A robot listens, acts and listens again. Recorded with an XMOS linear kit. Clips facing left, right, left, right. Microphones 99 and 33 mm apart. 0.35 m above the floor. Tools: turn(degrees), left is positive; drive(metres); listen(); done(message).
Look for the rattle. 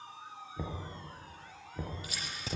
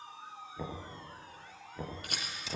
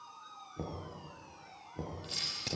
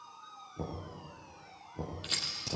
turn(degrees=-60)
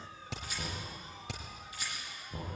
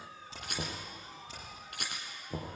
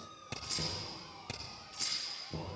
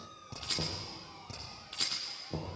turn(degrees=-60)
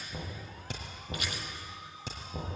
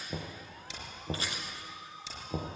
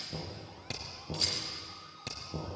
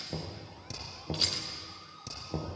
listen()
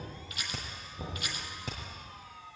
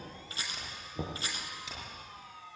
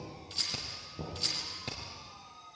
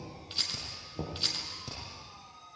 turn(degrees=-30)
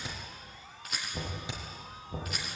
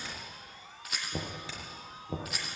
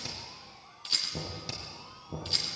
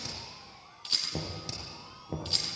done("Facing the rattle.")